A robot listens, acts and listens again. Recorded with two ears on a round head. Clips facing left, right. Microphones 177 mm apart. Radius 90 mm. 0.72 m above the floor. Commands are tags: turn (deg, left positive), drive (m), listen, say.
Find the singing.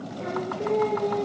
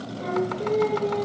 <turn deg="20"/>
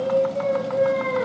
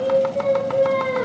<say>Found it: singing, straight ahead.</say>